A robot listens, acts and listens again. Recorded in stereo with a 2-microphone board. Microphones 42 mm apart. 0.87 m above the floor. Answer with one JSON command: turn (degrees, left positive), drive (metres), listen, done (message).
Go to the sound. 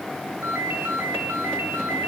{"turn": -75}
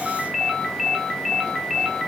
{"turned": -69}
{"drive": 1.0}
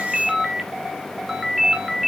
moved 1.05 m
{"turn": -10}
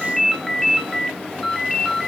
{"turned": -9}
{"drive": 1.0}
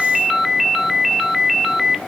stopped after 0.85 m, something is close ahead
{"done": "Arrived at the ringtone, straight ahead."}